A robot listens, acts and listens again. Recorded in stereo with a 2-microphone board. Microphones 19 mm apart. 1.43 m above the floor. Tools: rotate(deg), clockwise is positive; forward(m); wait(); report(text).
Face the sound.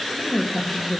rotate(20)
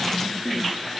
rotate(135)
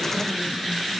wait()
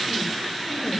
wait()
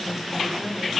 report("Facing the woman speaking.")